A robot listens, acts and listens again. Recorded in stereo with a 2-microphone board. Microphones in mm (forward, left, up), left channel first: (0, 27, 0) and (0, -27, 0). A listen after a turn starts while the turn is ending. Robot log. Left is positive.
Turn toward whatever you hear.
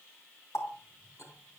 note: The running tap: about 60° left or 120° left.
cmd yaw +60
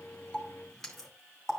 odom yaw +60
end: Facing the running tap.